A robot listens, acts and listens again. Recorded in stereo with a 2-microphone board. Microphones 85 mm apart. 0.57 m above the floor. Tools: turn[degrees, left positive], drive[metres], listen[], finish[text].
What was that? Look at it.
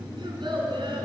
Thought: The child speaking: about 75° right or 105° right.
Action: turn[-75]
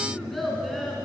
Action: finish[Found it: a child speaking, straight ahead.]